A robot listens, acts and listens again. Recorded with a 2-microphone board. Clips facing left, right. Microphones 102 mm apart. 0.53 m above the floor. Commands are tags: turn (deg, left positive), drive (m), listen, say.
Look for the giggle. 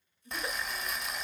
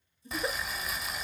<turn deg="-30"/>
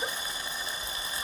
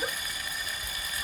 <listen/>
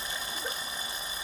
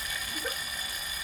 <listen/>
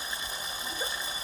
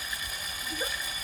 <say>I heard a giggle, but can't make it out now. It was about straight ahead or 120° right.</say>